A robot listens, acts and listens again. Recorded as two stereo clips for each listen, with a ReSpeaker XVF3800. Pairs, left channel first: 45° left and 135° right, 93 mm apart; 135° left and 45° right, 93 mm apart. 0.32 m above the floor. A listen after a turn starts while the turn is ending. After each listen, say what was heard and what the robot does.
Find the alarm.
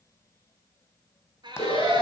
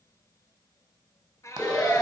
The alarm: 45° left. Turn 45° left.
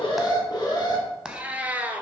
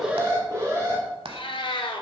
Found it: an alarm, straight ahead.